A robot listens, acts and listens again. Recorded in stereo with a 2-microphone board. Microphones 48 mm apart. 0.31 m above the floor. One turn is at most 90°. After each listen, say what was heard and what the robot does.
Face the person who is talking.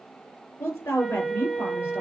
The woman speaking: about 75° left or 105° left. Turn 75° left.
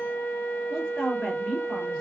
Found it: a woman speaking, straight ahead.